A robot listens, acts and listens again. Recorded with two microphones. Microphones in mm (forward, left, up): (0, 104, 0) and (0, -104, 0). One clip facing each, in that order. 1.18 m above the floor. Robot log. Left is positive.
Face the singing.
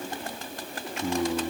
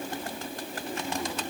cmd yaw +90
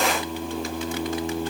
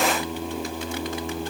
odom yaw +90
end: Facing the singing.